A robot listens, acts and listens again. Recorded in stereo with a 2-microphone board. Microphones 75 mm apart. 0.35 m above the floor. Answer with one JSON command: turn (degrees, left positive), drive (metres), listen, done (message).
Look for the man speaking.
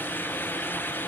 {"listen": true}
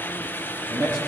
{"turn": -40}
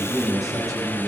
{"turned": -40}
{"done": "Facing the man speaking, over 4 m away."}